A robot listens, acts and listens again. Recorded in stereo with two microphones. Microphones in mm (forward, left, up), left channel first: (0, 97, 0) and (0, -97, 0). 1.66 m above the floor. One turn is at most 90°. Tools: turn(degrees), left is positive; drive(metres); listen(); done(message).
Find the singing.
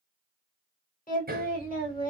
turn(degrees=45)
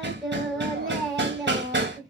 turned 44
done("Facing the singing, 1 to 2 m away.")